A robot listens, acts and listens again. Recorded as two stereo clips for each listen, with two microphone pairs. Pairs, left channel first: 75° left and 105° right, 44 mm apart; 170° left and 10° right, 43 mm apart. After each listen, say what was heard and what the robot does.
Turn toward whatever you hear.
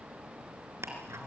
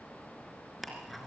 The ticking: 100° right. Turn 100° right.
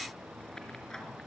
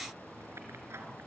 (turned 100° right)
Found it: ticking, straight ahead.